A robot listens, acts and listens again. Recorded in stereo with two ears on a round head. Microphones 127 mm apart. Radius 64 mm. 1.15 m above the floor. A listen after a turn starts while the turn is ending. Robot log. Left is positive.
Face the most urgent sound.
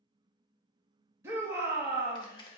note: The shout: about 15° right or 165° right.
cmd yaw -15
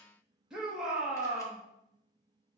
end: Found it: a shout, straight ahead.